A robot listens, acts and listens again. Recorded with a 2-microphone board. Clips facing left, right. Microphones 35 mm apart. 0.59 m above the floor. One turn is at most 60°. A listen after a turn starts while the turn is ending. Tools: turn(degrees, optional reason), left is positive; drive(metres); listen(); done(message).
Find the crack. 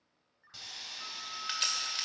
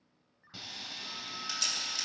turn(degrees=40, reason="The crack: about 40° left or 140° left.")
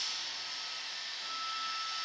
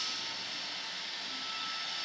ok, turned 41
listen()
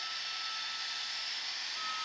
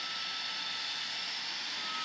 done("I heard a crack, but can't make it out now. It was about straight ahead or 100° left.")